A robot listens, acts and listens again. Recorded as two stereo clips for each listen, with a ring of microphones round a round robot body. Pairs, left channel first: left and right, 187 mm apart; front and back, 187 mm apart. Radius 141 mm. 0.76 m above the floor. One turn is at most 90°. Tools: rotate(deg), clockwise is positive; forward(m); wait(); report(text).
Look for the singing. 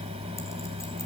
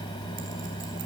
wait()
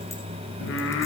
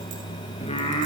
rotate(-60)
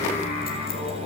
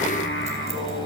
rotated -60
rotate(-20)
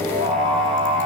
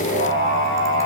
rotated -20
report("Facing the singing.")